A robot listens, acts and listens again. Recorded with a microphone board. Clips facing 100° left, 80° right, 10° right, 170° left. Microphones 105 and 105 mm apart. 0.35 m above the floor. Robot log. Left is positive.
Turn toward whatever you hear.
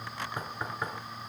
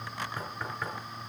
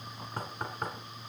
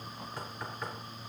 note: The knocking: 25° left.
cmd yaw +25
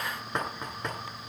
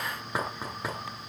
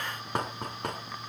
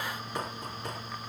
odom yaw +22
end: Facing the knocking.